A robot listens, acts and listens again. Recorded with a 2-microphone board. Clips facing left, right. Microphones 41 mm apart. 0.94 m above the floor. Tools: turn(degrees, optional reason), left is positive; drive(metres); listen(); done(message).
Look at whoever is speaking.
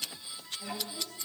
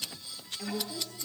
turn(degrees=-90)
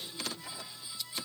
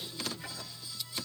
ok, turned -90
listen()
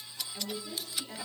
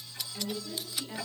done("Found it: a woman speaking, straight ahead, 2 to 4 m away.")